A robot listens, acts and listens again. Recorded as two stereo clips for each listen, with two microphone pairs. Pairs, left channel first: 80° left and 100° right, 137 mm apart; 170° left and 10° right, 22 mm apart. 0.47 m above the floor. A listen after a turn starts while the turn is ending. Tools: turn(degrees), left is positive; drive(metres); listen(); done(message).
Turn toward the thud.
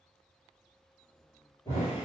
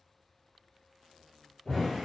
turn(degrees=140)
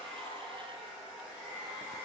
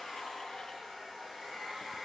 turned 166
turn(degrees=-30)
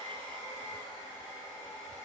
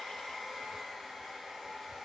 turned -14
turn(degrees=-15)
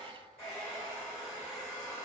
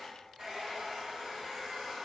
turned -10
done("Facing where the thud came from. I can't hear it now.")